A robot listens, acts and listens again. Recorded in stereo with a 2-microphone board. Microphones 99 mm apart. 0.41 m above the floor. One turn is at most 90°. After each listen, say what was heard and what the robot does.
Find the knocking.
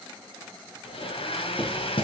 The knocking: about 60° left or 120° left. Turn 60° left.
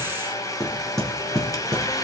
Facing the knocking.